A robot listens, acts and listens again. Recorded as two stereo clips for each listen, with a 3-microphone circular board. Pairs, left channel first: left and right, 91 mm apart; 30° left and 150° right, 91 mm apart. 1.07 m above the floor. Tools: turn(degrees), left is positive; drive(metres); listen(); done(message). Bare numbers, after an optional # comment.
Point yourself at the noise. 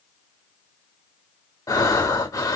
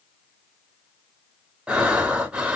# The breathing: 135° left.
turn(135)
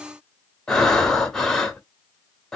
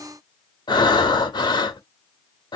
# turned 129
done("Found it: breathing, straight ahead, 1 to 2 m away.")